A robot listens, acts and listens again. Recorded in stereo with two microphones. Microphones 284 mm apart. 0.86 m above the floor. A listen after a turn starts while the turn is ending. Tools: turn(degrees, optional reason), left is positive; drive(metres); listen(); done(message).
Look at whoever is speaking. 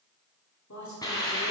turn(degrees=90)
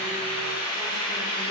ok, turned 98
turn(degrees=-10, reason="Nothing new. It was at 10° right.")
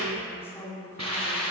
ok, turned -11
turn(degrees=10, reason="The woman speaking is now 10° left.")
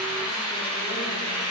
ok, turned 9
listen()
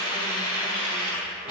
listen()
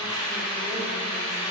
done("I heard a woman speaking from this way, but can't make it out now.")